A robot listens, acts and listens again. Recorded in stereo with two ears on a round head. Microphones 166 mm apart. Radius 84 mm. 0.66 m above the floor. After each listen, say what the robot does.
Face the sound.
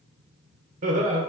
Turn 40° right.
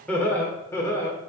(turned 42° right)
Turn 20° left.
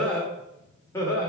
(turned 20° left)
Turn 20° left.
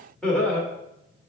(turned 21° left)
Turn 10° left.
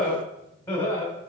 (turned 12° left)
Turn 15° left.
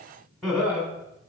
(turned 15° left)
Facing the laughter.